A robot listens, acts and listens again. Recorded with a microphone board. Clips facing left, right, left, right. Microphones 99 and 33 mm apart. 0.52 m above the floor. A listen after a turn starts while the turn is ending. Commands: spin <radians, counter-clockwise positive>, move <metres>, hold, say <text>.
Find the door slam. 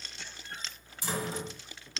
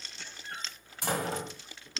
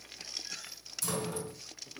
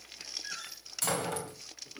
spin -1.13
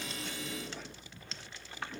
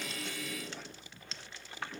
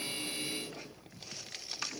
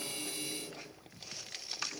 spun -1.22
hold
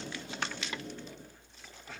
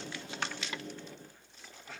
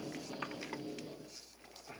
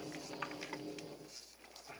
say I heard a door slam, but can't make it out now. It was about 5° left or 45° right.